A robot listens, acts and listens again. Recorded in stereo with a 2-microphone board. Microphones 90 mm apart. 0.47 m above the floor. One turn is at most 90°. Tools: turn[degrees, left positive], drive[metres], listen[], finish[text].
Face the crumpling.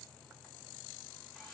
Action: listen[]
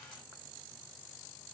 Action: listen[]
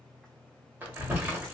Thought: The crumpling: about 20° right or 160° right.
Action: turn[-20]
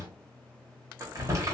Thought: So it is at 140° right.
Action: turn[-90]
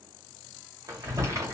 Thought: The crumpling is now 45° right.
Action: turn[-45]
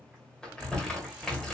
Thought: The crumpling is now 10° left.
Action: turn[10]
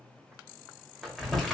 Action: finish[Facing the crumpling, 1 to 2 m away.]